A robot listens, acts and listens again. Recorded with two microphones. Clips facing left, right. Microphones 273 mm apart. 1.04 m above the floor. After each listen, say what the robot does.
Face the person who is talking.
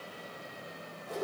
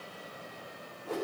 Keep listening.
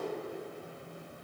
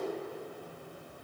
Keep listening.
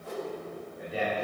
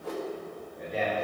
Turn 30° left.
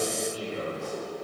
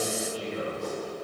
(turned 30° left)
Turn 140° left.
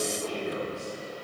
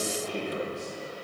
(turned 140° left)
Turn 30° left.
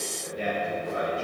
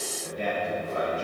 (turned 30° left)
Turn 15° left.
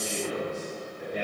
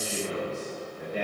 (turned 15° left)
Found it: a man speaking, straight ahead.